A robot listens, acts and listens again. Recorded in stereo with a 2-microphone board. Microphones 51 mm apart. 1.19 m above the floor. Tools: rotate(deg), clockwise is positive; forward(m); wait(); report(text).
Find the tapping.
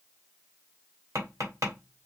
rotate(70)
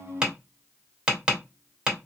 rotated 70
rotate(15)
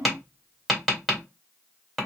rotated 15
report("Found it: tapping, straight ahead.")